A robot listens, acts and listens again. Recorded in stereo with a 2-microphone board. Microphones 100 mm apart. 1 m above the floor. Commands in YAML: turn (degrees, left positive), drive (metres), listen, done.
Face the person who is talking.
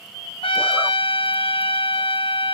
listen: true
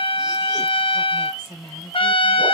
turn: -50
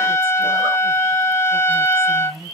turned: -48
turn: -80
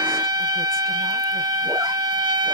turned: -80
listen: true
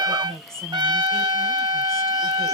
done: "Facing the woman speaking."